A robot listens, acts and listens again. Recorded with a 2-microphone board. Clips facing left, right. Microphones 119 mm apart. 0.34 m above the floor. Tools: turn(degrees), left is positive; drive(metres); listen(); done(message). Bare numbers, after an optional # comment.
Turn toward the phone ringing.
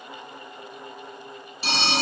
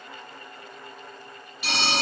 # The phone ringing: about 30° left or 150° left.
turn(30)
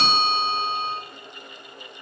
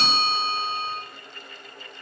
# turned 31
# So it is at 120° left.
turn(120)
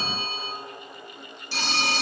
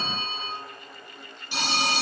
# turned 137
# The phone ringing is now 15° right.
turn(-15)
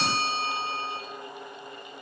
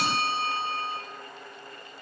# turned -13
done("Found it: a phone ringing, straight ahead.")